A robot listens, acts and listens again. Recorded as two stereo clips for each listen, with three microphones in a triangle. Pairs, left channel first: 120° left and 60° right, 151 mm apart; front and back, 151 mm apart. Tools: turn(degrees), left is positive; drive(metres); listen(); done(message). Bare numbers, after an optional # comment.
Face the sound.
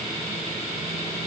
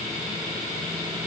listen()
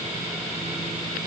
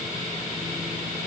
listen()
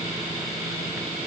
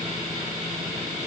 done("I can't make out anything.")